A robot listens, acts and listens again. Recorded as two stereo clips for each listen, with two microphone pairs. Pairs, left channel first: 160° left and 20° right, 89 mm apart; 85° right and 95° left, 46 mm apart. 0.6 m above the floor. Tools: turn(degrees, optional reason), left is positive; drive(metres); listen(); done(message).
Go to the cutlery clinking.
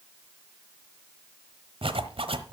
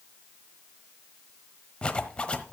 listen()
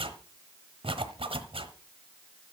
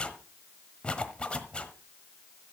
listen()
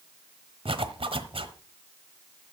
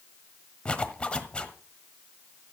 done("I can't make out cutlery clinking to turn to.")